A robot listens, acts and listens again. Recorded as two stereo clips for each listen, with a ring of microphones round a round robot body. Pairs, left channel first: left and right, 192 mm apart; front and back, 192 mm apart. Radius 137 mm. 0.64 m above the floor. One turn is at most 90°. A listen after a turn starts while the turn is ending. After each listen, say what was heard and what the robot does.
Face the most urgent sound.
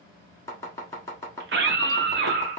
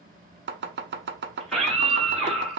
The scream: 90° right. Turn 90° right.
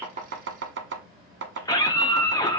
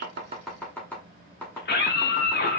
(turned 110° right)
The scream is now 20° left. Turn 20° left.
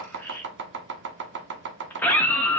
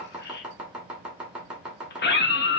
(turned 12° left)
The scream is now 10° left. Turn 10° left.
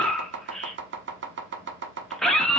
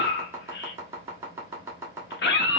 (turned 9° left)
Found it: a scream, straight ahead, under 1 m away.